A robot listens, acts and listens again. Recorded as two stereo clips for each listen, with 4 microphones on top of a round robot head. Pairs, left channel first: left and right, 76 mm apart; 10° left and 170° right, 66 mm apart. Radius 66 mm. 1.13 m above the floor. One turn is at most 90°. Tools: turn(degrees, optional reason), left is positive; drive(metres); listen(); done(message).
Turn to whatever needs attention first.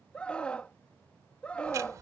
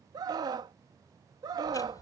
turn(degrees=90, reason="The scream: 170° left.")
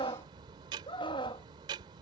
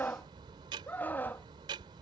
turn(degrees=75, reason="The scream is now 75° left.")
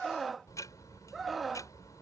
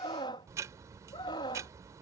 done("Found it: a scream, straight ahead.")